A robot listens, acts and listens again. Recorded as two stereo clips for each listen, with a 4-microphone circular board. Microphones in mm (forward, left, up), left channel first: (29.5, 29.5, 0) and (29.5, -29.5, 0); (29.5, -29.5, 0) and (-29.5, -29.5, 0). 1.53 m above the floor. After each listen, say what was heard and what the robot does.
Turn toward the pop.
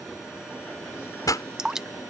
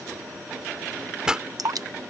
The pop: 100° left. Turn 100° left.
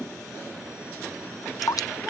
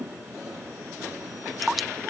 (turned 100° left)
I heard a pop from this way, but can't make it out now.